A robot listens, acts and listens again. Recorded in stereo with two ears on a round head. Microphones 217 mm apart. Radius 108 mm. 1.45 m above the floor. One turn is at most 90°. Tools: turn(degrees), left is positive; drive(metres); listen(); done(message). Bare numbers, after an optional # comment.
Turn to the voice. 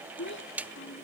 # The child speaking: about 50° left or 130° left.
turn(50)
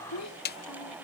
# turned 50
# So it is at 80° left.
turn(80)
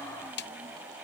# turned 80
listen()
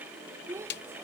# The child speaking is now 10° right.
turn(-10)
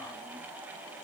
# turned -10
listen()
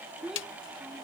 done("Found it: a child speaking, straight ahead.")